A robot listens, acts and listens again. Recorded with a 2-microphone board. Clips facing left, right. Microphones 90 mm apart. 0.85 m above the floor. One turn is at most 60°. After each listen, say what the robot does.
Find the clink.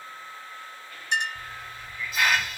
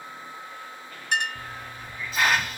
Turn 60° right.
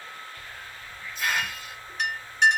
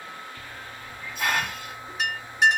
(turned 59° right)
Found it: a clink, straight ahead.